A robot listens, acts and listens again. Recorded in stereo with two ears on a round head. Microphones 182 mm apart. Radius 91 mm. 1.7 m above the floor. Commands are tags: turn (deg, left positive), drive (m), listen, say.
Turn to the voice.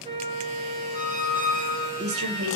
<turn deg="-75"/>
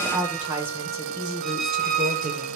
<turn deg="-35"/>
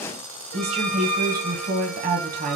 <turn deg="-45"/>
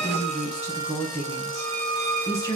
<turn deg="15"/>
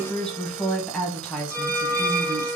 <say>Facing the woman speaking.</say>